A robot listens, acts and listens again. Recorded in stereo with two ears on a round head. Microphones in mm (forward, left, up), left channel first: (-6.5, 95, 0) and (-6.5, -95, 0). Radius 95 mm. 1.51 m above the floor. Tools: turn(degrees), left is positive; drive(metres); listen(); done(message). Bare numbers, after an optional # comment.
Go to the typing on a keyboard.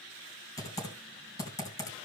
# The typing on a keyboard: about 15° left or 165° left.
turn(15)
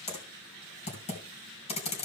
# So it is at 150° left.
turn(150)
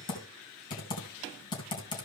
# The typing on a keyboard is now 25° left.
turn(25)
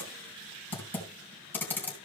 # The typing on a keyboard is now 10° left.
turn(10)
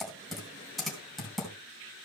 drive(1.0)
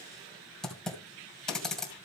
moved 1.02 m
drive(1.0)
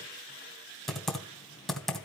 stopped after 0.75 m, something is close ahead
done("Arrived at the typing on a keyboard, straight ahead.")